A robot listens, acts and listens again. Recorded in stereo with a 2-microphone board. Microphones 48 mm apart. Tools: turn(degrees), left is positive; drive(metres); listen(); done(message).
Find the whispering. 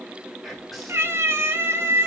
turn(degrees=30)
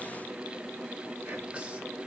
turn(degrees=-30)
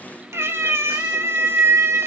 listen()
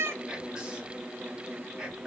turn(degrees=-20)
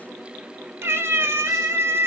listen()
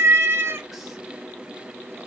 listen()
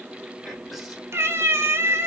done("Found it: whispering, straight ahead.")